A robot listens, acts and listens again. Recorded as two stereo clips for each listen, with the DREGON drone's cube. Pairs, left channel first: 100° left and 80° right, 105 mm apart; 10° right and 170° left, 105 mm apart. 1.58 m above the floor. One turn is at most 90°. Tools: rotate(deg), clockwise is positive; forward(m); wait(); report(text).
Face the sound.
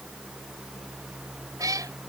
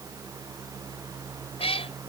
rotate(25)
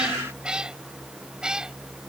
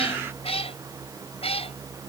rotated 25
report("Found it: a cat meowing, straight ahead.")